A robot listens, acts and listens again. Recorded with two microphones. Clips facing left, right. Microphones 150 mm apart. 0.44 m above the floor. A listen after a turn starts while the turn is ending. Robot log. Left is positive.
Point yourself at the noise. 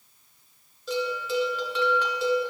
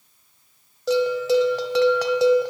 cmd yaw -90
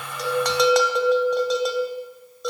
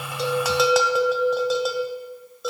end: Found it: a bell, straight ahead.